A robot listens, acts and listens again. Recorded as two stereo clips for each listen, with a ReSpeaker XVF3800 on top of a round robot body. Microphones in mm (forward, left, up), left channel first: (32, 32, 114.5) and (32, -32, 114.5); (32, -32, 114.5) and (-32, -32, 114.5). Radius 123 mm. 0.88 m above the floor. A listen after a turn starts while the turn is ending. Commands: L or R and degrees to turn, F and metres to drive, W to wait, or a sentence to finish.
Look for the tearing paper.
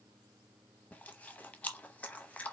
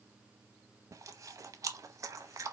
W
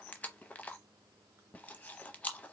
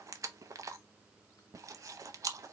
W
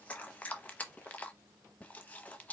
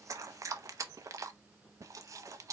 I can't make out tearing paper to turn to.